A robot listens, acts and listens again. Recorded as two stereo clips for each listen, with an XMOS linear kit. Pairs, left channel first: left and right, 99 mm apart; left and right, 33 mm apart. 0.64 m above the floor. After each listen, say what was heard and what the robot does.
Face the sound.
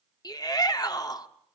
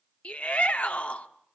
The shout: about 40° left or 140° left. Turn 40° left.
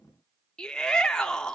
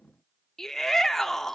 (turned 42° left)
So it is at 10° left. Turn 10° left.
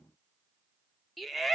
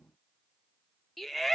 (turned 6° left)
Found it: a shout, straight ahead.